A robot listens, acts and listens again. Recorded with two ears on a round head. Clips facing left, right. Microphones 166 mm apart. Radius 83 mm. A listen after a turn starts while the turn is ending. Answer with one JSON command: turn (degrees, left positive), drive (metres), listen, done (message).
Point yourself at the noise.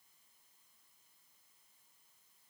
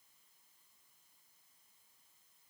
{"listen": true}
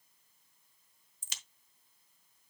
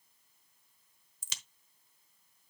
{"turn": -70}
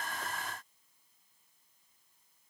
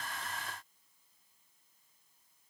{"listen": true}
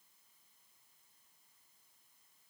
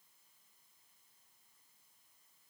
{"done": "I heard a crack, but can't make it out now. It was about straight ahead or 40° right."}